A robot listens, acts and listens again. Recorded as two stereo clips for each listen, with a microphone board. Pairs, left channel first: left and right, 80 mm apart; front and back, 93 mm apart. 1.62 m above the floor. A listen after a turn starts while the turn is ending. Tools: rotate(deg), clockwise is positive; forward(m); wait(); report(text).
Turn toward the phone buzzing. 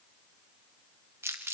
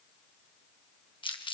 wait()
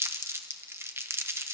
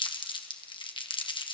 wait()
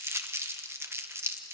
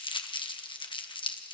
report("I can't make out a phone buzzing, only crumpling.")